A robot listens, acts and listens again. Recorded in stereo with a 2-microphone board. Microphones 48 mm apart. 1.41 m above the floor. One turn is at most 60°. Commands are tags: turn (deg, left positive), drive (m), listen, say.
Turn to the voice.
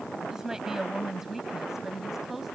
<turn deg="-30"/>
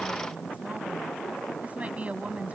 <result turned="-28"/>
<turn deg="-60"/>
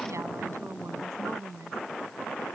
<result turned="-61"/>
<turn deg="-60"/>
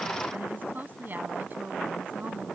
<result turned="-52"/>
<turn deg="-40"/>
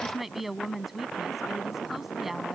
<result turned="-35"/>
<say>Facing the woman speaking.</say>